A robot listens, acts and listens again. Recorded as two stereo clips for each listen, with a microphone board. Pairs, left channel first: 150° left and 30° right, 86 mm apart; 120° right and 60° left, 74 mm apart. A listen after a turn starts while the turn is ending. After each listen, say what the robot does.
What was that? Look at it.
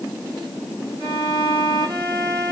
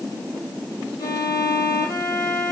Turn 75° right.
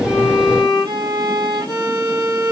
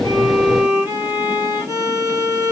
Found it: a violin, straight ahead.